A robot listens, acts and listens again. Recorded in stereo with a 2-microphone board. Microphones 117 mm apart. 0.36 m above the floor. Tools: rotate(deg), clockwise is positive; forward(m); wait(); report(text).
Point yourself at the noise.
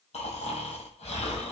rotate(-65)
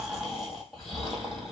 report("Facing the snoring, 1 to 2 m away.")